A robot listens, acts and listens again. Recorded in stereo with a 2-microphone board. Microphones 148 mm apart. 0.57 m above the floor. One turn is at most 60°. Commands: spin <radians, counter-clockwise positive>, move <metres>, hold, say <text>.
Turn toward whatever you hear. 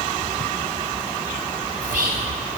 spin -1.05
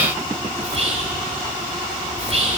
spin -0.79
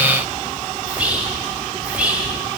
say Found it: whispering, straight ahead, 1 to 2 m away.